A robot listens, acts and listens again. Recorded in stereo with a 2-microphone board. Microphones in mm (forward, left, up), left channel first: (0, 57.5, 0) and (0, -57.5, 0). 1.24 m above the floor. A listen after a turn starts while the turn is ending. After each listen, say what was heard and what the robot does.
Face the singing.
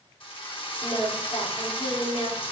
The singing: about 50° left or 130° left. Turn 50° left.
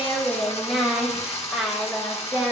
So it is at 10° right. Turn 10° right.
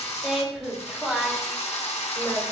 The singing is now 10° right. Turn 10° right.
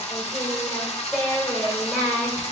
Found it: singing, straight ahead.